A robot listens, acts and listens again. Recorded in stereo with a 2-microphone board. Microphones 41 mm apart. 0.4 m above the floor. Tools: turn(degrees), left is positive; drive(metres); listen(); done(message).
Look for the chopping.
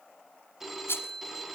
listen()
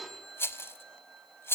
listen()
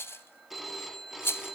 done("I can't make out chopping to turn to.")